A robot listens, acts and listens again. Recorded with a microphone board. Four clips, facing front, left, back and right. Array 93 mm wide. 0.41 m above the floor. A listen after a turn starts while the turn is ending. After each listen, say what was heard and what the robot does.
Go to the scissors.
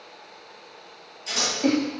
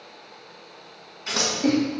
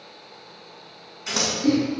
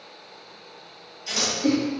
The scissors: 130° left. Turn 130° left.
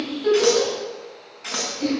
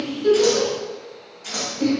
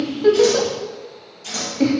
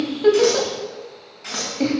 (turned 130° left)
The scissors is now 30° right. Turn 30° right.
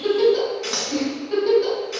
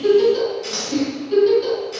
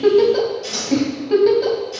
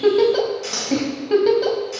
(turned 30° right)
The scissors is now 10° right. Turn 10° right.
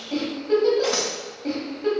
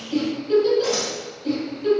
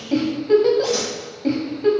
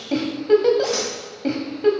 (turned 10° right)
Drive 1.0 m forward.
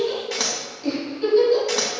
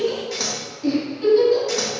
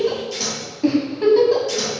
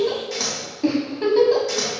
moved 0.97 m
Drive 1.0 m forward.
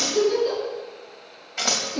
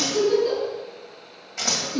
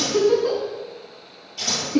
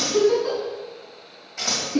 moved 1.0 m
Drive 1.0 m forward.
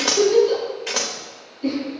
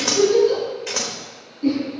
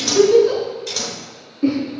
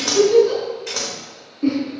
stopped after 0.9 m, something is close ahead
The scissors is now 15° left. Turn 15° left.
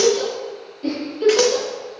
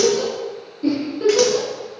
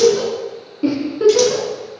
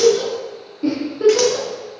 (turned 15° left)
Keep listening.
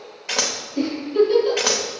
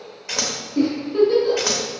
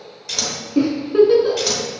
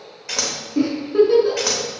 I am next to the scissors.